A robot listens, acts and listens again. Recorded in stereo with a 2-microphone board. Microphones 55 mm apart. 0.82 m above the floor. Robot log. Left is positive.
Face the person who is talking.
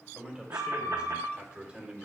note: The man speaking: about 20° right or 160° right.
cmd yaw -20
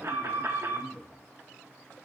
cmd yaw -30
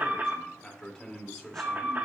note: So it is at 10° left.
cmd yaw +10
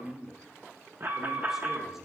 end: Facing the man speaking, 1 to 2 m away.